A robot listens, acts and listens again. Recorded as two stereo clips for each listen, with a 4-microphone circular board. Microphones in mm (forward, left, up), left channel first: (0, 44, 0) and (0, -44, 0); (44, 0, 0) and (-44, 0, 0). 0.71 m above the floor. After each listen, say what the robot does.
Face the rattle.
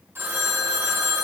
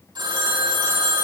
Keep listening.
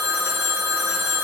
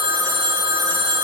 Keep listening.
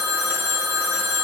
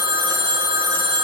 I can't make out a rattle to turn to.